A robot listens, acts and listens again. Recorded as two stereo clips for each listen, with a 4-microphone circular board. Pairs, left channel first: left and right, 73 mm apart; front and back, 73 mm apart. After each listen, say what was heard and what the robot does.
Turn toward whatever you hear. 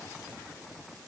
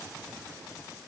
Keep listening.
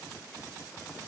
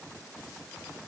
Keep listening.
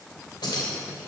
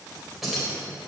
The keys jangling: 95° left. Turn 95° left.
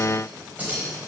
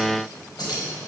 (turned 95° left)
The keys jangling is now 20° right. Turn 20° right.
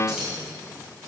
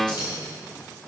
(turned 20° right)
Facing the keys jangling, over 4 m away.